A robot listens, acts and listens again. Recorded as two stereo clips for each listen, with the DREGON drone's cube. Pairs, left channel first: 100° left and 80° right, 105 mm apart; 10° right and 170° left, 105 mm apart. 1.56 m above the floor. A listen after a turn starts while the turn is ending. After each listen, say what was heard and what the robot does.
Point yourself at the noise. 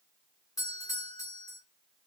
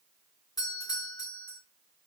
The doorbell: 40° left. Turn 40° left.
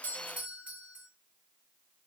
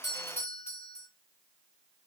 Found it: a doorbell, straight ahead.